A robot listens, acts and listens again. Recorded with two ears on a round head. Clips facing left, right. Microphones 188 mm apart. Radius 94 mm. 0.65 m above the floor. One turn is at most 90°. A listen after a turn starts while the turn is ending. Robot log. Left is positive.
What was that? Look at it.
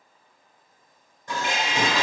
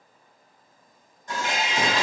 note: The dishes clattering: about 60° left or 120° left.
cmd yaw +60
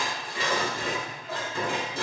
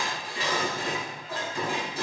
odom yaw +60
note: So it is at 55° left.
cmd yaw +55
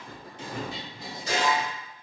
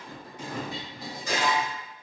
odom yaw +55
note: The dishes clattering is now 25° left.
cmd yaw +25
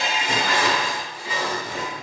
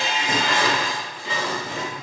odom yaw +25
note: The dishes clattering is now 10° left.
cmd yaw +10
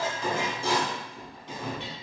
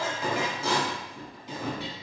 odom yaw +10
end: Facing the dishes clattering.